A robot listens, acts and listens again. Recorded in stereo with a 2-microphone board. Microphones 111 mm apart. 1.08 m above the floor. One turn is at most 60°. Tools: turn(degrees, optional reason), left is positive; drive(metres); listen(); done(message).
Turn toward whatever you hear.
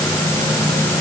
listen()
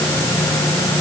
listen()
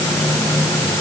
done("I can't make out anything.")